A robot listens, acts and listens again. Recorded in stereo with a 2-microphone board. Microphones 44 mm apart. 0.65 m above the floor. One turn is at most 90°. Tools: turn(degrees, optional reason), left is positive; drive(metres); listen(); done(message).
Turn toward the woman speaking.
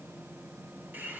listen()
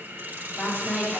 turn(degrees=-30, reason="The woman speaking: about 30° right or 150° right.")
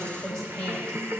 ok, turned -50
turn(degrees=10, reason="So it is at 10° left.")
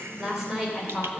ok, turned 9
turn(degrees=-15, reason="The woman speaking is now 15° right.")
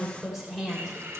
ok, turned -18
turn(degrees=-10, reason="The woman speaking is now 10° right.")
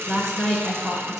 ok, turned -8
turn(degrees=-10, reason="The woman speaking is now 10° right.")
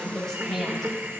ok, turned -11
done("Facing the woman speaking.")